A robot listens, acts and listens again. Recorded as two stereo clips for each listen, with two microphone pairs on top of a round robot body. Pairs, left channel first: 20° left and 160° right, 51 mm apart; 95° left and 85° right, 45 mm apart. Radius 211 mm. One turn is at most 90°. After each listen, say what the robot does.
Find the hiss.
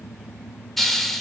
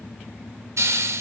Turn 70° right.
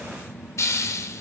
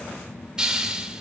Turn 10° right.
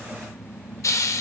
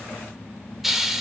Found it: a hiss, straight ahead, under 1 m away.